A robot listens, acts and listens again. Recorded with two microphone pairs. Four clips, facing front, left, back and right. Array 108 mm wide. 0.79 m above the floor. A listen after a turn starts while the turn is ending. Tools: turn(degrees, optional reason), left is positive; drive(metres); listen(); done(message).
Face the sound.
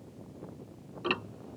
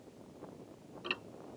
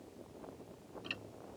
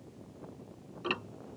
turn(degrees=-25, reason="The ticking: 25° right.")
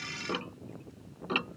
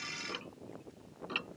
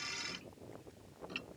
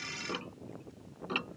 turn(degrees=-15, reason="The ticking is now 15° right.")
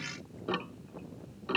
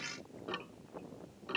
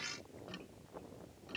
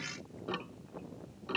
done("Facing the ticking.")